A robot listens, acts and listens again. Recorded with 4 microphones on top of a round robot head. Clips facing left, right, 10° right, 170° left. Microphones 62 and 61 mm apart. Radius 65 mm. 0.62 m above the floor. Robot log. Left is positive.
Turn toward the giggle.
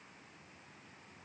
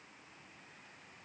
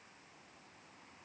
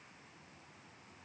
cmd idle
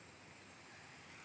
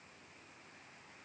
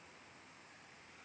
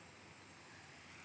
cmd idle
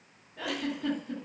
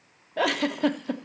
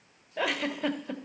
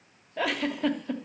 note: The giggle: 95° right.
cmd yaw -95
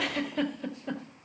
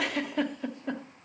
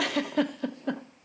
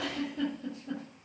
end: Found it: a giggle, straight ahead.